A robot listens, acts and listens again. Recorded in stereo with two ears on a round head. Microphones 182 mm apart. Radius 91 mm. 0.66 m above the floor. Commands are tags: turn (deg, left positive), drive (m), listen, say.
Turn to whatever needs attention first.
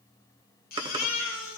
<turn deg="45"/>
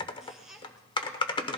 <say>Found it: a baby crying, straight ahead.</say>